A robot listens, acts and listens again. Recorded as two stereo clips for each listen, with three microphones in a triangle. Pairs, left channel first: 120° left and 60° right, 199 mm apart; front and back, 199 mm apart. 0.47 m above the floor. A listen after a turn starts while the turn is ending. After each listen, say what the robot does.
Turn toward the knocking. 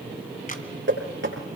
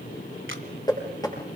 Turn 70° right.
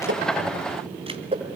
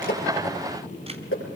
Facing the knocking, over 4 m away.